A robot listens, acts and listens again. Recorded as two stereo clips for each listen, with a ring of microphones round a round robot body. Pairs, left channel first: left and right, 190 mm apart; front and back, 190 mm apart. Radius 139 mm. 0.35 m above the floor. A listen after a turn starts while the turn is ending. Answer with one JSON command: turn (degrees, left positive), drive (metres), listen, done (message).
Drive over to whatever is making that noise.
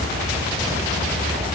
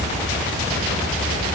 {"listen": true}
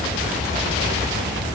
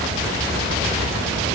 {"listen": true}
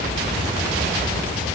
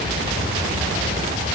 {"done": "I can't make out anything."}